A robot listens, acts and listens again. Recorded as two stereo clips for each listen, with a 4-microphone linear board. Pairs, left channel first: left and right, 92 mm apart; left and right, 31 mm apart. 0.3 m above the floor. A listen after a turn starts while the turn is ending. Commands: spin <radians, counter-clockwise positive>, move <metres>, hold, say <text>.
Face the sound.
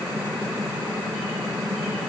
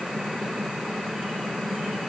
hold
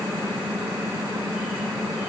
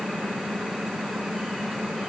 hold
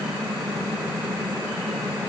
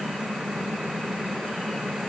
say I can't make out anything.